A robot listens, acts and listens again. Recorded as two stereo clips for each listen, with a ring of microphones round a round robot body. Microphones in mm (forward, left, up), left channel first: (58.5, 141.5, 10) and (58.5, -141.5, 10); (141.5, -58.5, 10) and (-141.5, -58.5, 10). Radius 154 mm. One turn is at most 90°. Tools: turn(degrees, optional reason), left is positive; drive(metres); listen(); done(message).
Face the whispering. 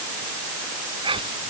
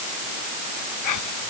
turn(degrees=-15, reason="The whispering: 15° right.")
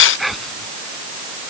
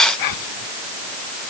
done("Found it: whispering, straight ahead.")